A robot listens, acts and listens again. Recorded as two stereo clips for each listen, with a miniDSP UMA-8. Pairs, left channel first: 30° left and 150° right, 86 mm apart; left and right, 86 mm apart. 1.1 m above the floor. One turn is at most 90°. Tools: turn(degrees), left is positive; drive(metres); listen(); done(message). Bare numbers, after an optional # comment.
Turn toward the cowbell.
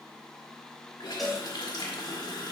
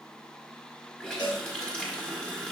# The cowbell: 120° left.
turn(90)
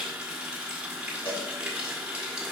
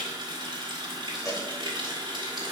# The cowbell is now 40° left.
turn(40)
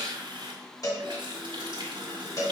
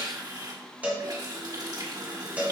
# The cowbell is now 15° right.
turn(-15)
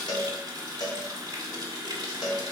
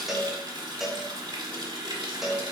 done("Found it: a cowbell, straight ahead.")